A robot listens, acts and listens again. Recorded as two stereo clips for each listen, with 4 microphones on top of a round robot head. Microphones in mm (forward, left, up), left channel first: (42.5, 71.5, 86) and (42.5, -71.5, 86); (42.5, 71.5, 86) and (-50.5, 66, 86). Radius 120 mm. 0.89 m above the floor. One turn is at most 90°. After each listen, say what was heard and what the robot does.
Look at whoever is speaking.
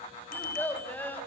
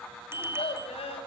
The child speaking: 15° left. Turn 15° left.
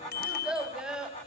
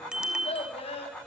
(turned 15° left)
Facing the child speaking, over 4 m away.